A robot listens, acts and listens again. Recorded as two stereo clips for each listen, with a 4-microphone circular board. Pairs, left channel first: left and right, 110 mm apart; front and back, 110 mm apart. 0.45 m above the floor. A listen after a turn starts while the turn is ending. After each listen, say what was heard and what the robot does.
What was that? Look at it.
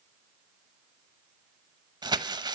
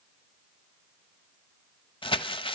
The crumpling: 40° right. Turn 40° right.
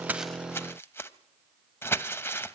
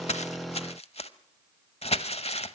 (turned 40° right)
The crumpling is now 20° left. Turn 20° left.
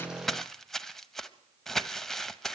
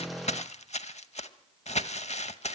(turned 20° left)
Facing the crumpling, under 1 m away.